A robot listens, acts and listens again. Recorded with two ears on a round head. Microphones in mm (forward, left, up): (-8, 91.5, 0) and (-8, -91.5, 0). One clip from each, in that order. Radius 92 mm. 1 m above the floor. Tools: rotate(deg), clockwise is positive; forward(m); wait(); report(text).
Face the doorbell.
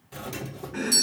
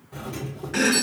rotate(-70)
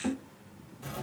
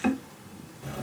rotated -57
rotate(-40)
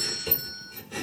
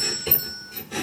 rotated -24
rotate(-15)
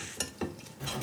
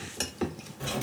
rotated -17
report("Found it: a doorbell, straight ahead, 2 to 4 m away.")